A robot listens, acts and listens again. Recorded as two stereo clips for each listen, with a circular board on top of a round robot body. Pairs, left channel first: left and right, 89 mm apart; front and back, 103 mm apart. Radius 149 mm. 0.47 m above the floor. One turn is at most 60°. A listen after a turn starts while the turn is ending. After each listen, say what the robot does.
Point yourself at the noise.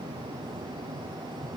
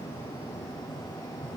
Keep listening.
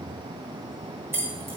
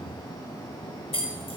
Turn 25° right.
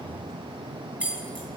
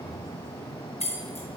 Turn 10° right.
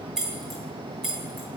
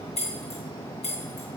Facing the keys jangling.